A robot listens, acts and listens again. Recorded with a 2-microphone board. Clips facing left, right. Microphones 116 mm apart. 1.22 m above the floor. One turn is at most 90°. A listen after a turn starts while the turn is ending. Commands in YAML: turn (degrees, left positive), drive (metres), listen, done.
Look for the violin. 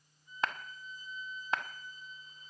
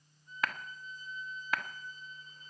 turn: 30
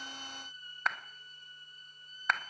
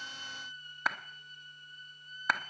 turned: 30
turn: 90
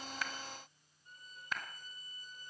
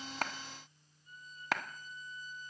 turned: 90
turn: 65
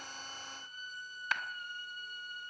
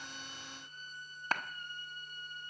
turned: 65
done: "Facing the violin, 2 to 4 m away."